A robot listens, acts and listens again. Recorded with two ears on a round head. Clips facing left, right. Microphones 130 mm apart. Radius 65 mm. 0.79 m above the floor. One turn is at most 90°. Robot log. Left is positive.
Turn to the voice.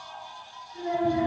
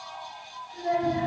note: The child speaking: about 35° right or 145° right.
cmd yaw -35
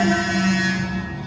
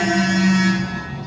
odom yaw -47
cmd idle
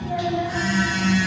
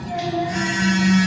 note: So it is at 15° left.
cmd yaw +15
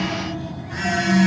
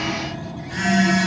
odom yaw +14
cmd idle
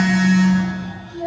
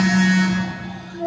end: Facing the child speaking.